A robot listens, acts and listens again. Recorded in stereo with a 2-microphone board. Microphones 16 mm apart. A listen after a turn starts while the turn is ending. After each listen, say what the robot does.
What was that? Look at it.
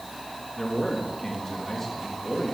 Turn 20° left.
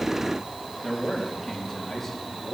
Turn 30° left.
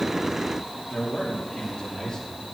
Turn 130° left.
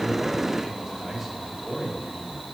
Turn 20° right.
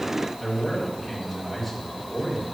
Facing the man speaking, over 4 m away.